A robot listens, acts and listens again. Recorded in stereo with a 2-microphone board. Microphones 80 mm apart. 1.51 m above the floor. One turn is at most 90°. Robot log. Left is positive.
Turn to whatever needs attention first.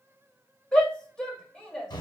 cmd yaw +30
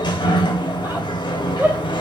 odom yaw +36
note: So it is at 25° right.
cmd yaw -25
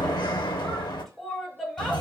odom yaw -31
end: Found it: a shout, straight ahead, 1 to 2 m away.